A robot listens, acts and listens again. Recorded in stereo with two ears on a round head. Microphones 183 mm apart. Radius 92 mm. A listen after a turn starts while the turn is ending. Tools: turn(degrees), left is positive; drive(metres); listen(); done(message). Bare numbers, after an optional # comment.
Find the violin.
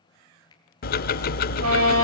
# The violin: about 75° right or 105° right.
turn(-75)
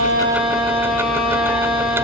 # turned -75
done("Found it: a violin, straight ahead.")